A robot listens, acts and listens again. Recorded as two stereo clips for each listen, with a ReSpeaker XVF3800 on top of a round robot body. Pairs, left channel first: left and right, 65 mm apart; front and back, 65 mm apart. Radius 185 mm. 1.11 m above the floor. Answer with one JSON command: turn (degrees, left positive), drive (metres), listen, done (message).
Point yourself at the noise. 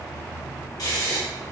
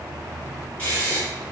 {"turn": 70}
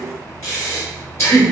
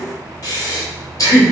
{"turn": 45}
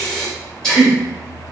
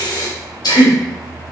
{"turn": 10}
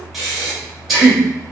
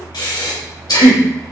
{"done": "Facing the breathing."}